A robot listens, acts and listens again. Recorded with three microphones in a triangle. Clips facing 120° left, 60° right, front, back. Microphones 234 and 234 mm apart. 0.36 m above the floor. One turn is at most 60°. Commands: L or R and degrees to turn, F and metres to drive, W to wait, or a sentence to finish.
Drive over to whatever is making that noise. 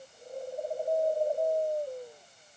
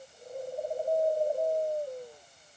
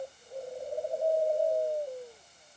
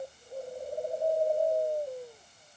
W
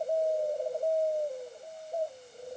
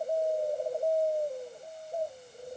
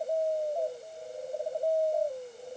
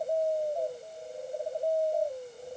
W
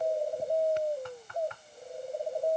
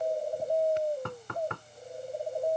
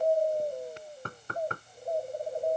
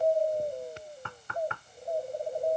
R45
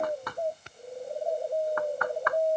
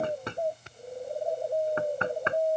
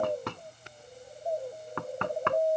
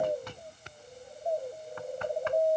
F1.0
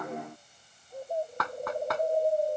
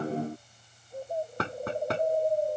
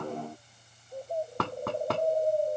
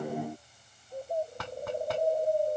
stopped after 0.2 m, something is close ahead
Something is in my way. I am facing the knocking but have not reached it.